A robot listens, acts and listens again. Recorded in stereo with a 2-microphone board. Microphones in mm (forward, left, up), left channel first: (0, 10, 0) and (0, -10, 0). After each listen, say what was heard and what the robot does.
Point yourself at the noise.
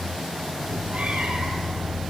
The cat meowing: about 65° right or 115° right. Turn 65° right.
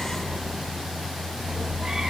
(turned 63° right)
Keep listening.
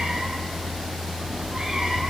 So it is at 30° right. Turn 30° right.
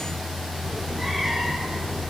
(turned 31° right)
Facing the cat meowing.